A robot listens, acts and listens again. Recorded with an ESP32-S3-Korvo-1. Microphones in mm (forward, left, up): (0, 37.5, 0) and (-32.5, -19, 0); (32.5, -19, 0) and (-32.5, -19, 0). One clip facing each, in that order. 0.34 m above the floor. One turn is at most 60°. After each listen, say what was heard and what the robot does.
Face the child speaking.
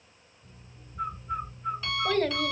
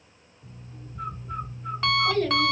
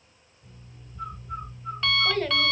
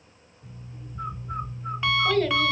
The child speaking: 85° left. Turn 60° left.
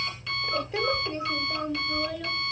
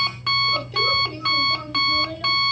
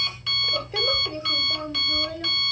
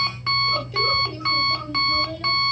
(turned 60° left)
The child speaking is now 25° right. Turn 25° right.
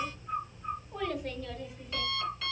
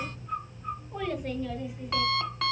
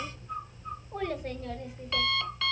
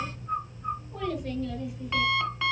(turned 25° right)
The child speaking is now 45° right. Turn 45° right.
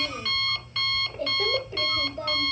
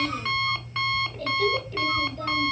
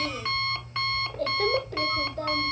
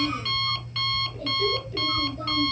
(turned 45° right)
Facing the child speaking, 1 to 2 m away.